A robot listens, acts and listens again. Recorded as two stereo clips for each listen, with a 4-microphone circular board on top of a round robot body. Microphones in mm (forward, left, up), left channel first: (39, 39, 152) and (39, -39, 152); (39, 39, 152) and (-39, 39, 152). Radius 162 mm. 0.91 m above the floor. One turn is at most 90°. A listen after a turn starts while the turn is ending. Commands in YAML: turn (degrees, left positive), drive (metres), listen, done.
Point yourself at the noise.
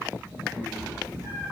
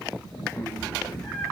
turn: -50
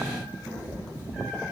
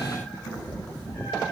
turn: -15
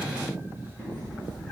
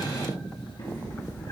done: "Found it: a cat meowing, straight ahead."